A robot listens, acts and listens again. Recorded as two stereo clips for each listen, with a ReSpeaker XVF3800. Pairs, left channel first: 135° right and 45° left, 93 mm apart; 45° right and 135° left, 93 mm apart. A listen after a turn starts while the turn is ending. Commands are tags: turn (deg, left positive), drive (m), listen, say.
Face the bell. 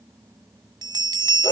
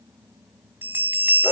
<turn deg="70"/>
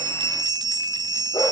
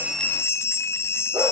<turn deg="15"/>
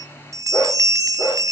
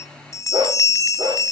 <say>Found it: a bell, straight ahead, 1 to 2 m away.</say>